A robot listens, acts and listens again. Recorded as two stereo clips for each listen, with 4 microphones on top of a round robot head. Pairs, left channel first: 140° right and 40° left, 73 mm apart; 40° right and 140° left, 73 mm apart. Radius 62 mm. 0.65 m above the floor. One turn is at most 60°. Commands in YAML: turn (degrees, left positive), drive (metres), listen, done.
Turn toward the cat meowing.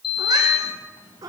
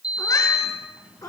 done: "Found it: a cat meowing, straight ahead."